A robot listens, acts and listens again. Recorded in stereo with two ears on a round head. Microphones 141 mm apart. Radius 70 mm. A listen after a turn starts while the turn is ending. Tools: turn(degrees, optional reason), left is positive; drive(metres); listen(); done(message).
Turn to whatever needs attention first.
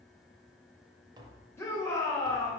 turn(degrees=15, reason="The shout: about 15° left or 165° left.")
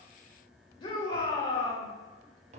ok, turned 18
turn(degrees=150, reason="So it is at 150° left.")
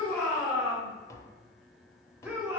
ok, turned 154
turn(degrees=-10, reason="The shout is now 10° right.")
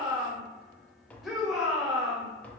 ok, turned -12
done("Found it: a shout, straight ahead, 1 to 2 m away.")